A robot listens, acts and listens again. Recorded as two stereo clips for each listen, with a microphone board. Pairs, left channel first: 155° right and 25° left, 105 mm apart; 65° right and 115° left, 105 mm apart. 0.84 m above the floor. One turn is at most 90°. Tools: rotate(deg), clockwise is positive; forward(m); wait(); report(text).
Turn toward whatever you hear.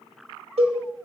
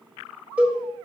rotate(-35)
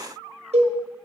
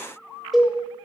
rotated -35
rotate(-25)
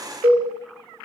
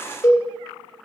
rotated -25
rotate(10)
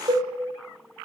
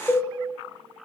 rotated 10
report("Found it: a cowbell, straight ahead, 1 to 2 m away.")